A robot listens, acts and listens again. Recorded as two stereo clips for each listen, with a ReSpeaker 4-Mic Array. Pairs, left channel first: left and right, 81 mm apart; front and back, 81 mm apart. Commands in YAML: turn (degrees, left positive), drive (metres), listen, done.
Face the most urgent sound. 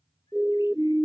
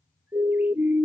turn: -170
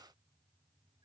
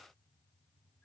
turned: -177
listen: true
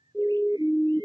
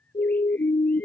done: "Found it: a siren, straight ahead."